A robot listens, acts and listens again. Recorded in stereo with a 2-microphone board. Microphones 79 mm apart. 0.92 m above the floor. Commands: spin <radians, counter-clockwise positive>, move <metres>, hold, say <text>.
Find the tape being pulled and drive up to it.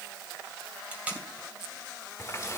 spin -0.35
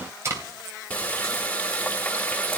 spin -2.53
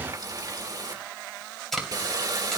move 1.0
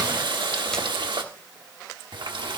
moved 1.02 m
hold
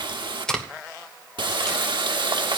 spin 0.17
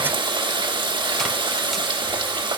hold
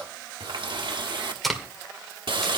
move 1.0
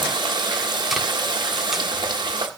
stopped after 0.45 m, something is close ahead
hold
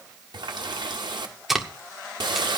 say I am next to the tape being pulled.